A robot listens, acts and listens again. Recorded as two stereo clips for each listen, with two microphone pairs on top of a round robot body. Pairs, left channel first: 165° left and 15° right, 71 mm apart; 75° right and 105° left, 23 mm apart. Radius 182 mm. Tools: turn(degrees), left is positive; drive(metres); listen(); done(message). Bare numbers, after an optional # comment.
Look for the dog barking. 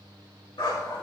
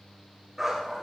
# The dog barking: 170° left.
turn(170)
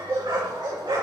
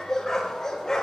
# The dog barking is now 25° right.
turn(-25)
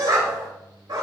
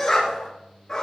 # The dog barking is now 15° right.
turn(-15)
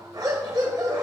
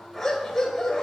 # The dog barking is now 10° right.
turn(-10)
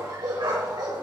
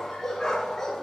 # The dog barking is now 10° right.
turn(-10)
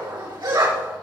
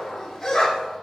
done("Found it: a dog barking, straight ahead.")